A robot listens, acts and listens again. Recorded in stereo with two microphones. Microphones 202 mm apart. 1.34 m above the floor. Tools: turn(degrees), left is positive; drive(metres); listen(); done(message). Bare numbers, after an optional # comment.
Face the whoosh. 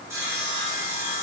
listen()
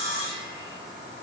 listen()
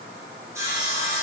done("I can't make out a whoosh, only sawing.")